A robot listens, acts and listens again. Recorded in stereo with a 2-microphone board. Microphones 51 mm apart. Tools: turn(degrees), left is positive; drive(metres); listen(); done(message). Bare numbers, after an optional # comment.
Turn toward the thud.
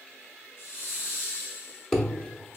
turn(30)
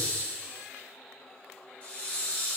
listen()
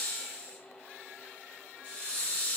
done("I heard a thud, but can't make it out now. It was about 25° right or 145° left.")